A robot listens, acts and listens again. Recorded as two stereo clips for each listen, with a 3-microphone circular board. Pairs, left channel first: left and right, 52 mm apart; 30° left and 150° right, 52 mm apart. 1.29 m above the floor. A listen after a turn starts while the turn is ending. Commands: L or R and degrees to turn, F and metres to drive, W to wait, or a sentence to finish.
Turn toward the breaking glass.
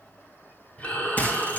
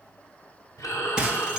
L140
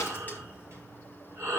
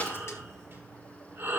Facing where the breaking glass came from. I can't hear it now.